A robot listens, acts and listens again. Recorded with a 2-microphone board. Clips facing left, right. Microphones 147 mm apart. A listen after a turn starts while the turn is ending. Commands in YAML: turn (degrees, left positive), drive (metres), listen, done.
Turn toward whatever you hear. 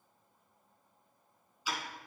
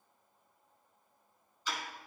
turn: 30
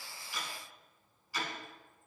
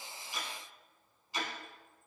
turn: -20
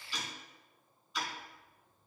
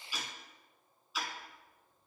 done: "Found it: ticking, straight ahead, 1 to 2 m away."